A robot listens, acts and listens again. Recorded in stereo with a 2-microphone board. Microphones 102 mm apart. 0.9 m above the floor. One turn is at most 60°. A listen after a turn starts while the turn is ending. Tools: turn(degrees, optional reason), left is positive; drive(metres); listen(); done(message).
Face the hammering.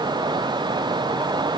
listen()
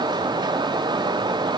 listen()
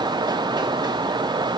done("I can't make out hammering to turn to.")